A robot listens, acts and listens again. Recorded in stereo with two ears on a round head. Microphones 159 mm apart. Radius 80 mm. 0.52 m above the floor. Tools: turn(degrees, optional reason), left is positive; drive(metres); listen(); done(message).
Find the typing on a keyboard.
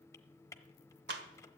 turn(degrees=15, reason="The typing on a keyboard: about 15° left or 165° left.")
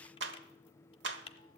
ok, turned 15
turn(degrees=150, reason="So it is at 150° left.")
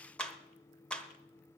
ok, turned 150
listen()
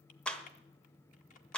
listen()
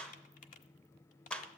turn(degrees=45, reason="The typing on a keyboard is now 45° left.")
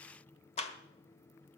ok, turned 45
listen()
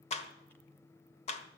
listen()
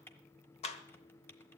turn(degrees=10, reason="The typing on a keyboard is now 10° left.")
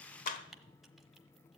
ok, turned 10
done("Facing the typing on a keyboard.")